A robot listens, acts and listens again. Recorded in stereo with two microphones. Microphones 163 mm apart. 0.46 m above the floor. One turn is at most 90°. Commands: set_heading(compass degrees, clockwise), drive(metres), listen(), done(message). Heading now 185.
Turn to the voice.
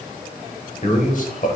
set_heading(130)
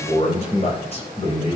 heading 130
set_heading(95)
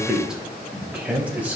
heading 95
set_heading(105)
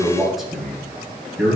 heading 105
done("Facing the man speaking, 2 to 4 m away.")